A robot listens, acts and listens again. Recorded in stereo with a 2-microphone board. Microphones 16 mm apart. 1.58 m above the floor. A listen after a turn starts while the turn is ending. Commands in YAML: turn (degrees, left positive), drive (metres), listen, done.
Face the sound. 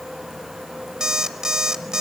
turn: -45
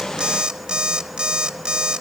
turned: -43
turn: -80
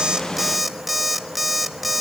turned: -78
done: "Facing the alarm clock."